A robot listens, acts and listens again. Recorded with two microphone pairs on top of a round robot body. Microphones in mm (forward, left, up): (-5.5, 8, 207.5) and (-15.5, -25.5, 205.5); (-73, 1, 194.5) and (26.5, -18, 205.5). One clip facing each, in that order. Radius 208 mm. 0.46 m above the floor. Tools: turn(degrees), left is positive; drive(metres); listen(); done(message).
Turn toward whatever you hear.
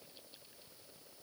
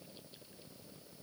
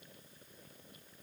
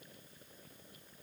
listen()
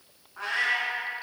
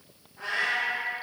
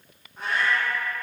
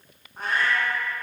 turn(degrees=40)
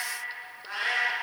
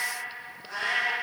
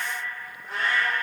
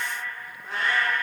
turn(degrees=15)
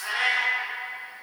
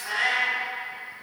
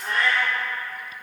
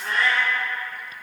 turn(degrees=10)
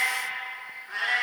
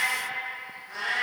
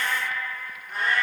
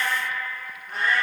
turn(degrees=10)
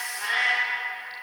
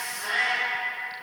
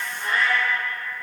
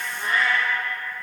done("Found it: a cat meowing, straight ahead, 2 to 4 m away.")